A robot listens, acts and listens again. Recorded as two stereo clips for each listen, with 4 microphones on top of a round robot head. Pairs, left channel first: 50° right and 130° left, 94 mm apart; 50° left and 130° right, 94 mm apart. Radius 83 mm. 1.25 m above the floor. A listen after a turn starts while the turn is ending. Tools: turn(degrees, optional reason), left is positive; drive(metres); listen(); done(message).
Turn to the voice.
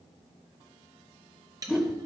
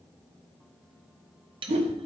listen()
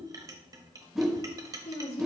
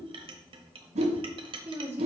turn(degrees=-60, reason="The woman speaking: 60° right.")
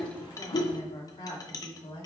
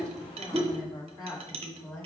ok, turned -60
turn(degrees=-10, reason="The woman speaking is now 10° right.")
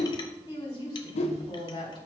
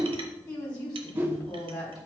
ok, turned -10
done("Facing the woman speaking.")